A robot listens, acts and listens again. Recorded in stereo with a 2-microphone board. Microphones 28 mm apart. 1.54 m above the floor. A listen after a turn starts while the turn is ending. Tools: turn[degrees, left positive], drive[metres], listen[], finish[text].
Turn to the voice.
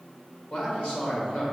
Thought: The man speaking: about 50° left or 130° left.
Action: turn[50]
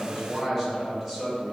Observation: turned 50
Action: finish[Facing the man speaking.]